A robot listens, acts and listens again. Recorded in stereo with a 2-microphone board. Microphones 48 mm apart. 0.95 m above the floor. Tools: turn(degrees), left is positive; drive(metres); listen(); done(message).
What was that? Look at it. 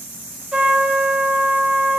turn(degrees=-20)
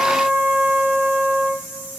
turn(degrees=-135)
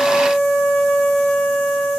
turn(degrees=25)
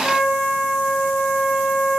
done("Found it: a trumpet, straight ahead.")